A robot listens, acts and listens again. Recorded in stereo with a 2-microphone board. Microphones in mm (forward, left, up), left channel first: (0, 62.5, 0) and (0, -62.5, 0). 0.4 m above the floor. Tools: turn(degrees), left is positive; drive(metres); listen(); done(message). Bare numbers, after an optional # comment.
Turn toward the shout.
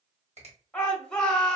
turn(30)
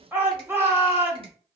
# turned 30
# So it is at 20° right.
turn(-20)
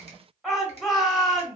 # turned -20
done("Facing the shout.")